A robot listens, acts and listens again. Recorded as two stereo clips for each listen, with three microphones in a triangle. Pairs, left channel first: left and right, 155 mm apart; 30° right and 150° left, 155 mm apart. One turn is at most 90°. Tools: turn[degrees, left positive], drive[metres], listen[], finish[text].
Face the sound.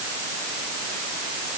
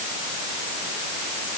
Action: listen[]
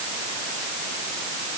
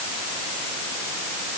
Action: listen[]
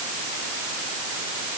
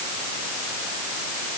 Action: finish[I can't make out anything to turn to.]